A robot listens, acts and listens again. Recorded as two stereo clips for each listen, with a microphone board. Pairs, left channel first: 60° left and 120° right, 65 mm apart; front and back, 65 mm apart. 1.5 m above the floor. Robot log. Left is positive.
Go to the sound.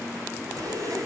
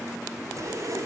note: The zipper: 145° right.
cmd yaw -145
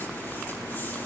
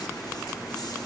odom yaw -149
cmd idle
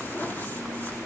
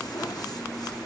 cmd fwd 1.0
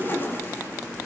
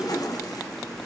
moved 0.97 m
cmd fwd 1.0
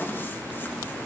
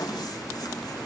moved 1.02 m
cmd fwd 1.0
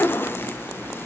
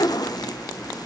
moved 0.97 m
cmd fwd 1.0
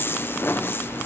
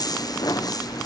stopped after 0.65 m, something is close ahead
end: Arrived at the zipper, straight ahead.